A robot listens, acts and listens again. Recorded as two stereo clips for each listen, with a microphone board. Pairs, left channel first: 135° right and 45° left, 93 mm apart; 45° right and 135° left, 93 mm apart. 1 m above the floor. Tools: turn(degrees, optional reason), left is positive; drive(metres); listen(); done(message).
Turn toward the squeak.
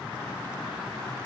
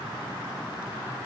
listen()
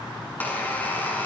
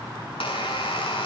turn(degrees=-65, reason="The squeak: 65° right.")
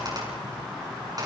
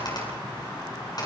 done("Facing the squeak.")